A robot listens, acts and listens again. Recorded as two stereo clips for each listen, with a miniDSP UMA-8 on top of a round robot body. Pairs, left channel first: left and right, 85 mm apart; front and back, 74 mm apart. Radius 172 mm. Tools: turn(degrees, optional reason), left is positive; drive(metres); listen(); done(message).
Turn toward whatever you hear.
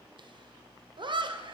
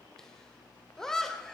turn(degrees=-85, reason="The laughter: 85° right.")
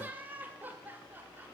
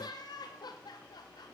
turn(degrees=-20, reason="The laughter is now 20° right.")
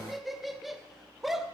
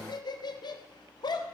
done("Facing the laughter.")